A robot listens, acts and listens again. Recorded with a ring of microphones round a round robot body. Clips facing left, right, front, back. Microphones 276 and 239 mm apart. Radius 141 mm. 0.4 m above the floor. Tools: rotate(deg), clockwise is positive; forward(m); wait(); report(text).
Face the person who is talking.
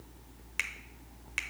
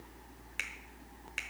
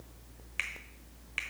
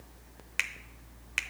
wait()
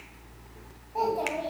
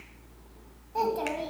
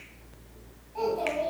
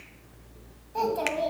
rotate(150)
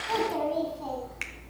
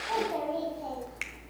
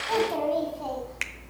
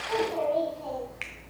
rotate(-20)
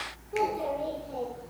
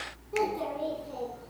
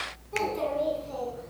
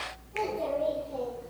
rotate(15)
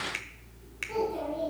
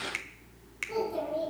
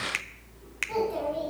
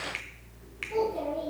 report("Facing the child speaking, 2 to 4 m away.")